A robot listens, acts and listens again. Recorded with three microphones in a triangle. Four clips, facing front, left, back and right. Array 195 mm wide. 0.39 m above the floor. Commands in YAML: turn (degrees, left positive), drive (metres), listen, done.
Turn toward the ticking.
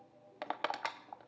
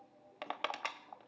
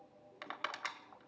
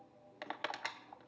listen: true
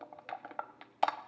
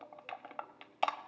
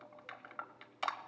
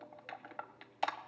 listen: true
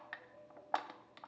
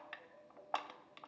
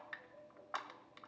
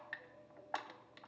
done: "I can't make out ticking, only crushing."